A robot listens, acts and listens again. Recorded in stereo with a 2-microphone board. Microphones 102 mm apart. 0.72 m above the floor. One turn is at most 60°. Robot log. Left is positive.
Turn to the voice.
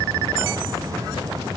cmd idle
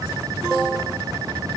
cmd idle
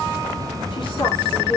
note: The woman speaking: about 55° left or 125° left.
cmd yaw +55
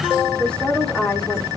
note: So it is at 10° left.
cmd yaw +10
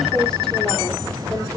end: Found it: a woman speaking, straight ahead, 2 to 4 m away.